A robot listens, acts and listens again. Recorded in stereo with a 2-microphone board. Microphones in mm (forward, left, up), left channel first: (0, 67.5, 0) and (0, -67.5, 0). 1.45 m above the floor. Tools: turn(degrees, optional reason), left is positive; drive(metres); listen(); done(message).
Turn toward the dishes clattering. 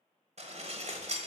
turn(degrees=-55, reason="The dishes clattering: about 55° right or 125° right.")
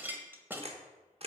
turn(degrees=-15, reason="So it is at 15° right.")
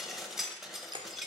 done("Facing the dishes clattering.")